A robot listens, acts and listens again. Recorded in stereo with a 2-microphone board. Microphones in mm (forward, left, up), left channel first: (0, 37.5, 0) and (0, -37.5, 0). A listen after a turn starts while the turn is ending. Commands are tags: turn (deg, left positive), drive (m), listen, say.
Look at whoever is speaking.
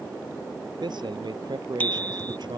<turn deg="-75"/>
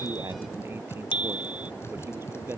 <listen/>
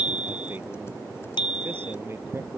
<listen/>
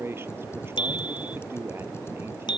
<turn deg="-30"/>
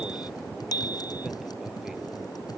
<listen/>
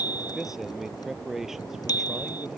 <say>Facing the man speaking.</say>